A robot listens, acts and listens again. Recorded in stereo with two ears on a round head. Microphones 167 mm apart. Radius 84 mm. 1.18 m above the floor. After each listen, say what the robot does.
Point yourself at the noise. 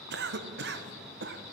Turn 60° right.
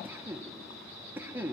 Turn 10° right.
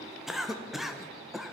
Facing the cough, under 1 m away.